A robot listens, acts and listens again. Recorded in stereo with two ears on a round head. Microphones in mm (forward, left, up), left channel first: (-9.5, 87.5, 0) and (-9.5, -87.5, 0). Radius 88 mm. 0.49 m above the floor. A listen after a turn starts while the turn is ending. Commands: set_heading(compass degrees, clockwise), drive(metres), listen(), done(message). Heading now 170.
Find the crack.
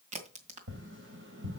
set_heading(205)
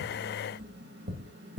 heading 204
listen()
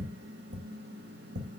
done("I heard a crack, but can't make it out now. It was about straight ahead or 110° right.")